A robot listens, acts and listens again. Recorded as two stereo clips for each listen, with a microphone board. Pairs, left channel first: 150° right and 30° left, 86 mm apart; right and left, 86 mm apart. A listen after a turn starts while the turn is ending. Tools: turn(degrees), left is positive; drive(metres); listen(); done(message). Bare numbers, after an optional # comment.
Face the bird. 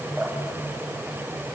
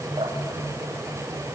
listen()
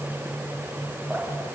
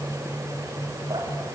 listen()
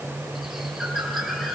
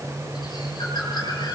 # The bird: 60° right.
turn(-60)
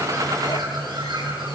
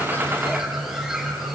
done("Found it: a bird, straight ahead, over 4 m away.")